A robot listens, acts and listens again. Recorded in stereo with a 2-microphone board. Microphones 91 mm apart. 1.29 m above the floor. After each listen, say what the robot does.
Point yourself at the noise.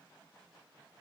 Keep listening.
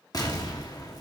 Turn 45° left.
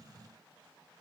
Keep listening.
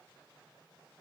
I heard an explosion, but can't make it out now. It was about straight ahead or 90° left.